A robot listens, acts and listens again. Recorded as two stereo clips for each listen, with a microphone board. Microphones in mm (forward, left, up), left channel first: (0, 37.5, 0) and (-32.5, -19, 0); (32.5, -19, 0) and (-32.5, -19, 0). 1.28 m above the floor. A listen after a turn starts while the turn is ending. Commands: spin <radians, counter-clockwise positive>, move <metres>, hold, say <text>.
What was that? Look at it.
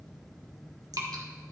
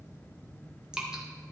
spin -1.75
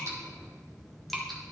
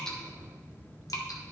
spin -0.52
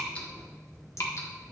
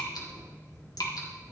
spin 0.35
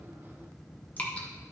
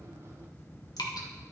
say Found it: dripping, straight ahead.